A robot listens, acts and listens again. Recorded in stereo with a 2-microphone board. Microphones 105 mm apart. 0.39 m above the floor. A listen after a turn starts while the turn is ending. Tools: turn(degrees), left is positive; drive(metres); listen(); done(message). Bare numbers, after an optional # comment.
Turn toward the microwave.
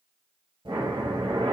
listen()
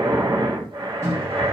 # The microwave: about 30° right or 150° right.
turn(-30)
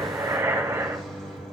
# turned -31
done("Found it: a microwave, straight ahead.")